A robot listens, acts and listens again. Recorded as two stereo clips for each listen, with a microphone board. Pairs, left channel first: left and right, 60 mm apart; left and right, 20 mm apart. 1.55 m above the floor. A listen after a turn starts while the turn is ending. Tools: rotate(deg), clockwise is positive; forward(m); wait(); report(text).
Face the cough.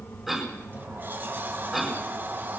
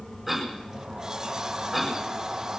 rotate(-30)
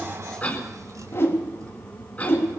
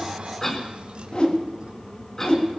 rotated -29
rotate(-150)
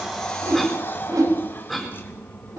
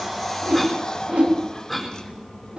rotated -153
report("Found it: a cough, straight ahead, over 4 m away.")